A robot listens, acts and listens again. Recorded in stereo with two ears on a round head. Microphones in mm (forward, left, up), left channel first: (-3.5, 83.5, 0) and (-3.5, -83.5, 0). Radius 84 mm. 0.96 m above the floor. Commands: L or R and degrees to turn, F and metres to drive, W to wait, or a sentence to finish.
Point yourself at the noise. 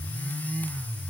W
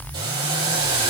R25
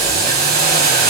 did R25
R130
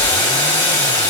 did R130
L10
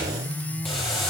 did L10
Found it: boiling, straight ahead, over 4 m away.